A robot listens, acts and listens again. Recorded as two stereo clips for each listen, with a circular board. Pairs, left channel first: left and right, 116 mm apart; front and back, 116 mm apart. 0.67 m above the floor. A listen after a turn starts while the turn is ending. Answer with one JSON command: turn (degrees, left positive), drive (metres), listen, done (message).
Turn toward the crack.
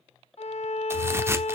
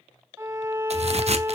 {"turn": -155}
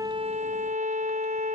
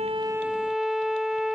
{"done": "Facing where the crack came from. I can't hear it now."}